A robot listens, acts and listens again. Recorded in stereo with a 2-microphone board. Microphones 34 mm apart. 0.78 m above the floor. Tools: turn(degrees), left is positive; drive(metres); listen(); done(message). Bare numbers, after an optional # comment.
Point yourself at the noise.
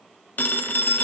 # The phone ringing: about 60° left or 120° left.
turn(60)
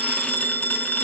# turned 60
# So it is at 55° left.
turn(55)
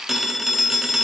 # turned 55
done("Facing the phone ringing, under 1 m away.")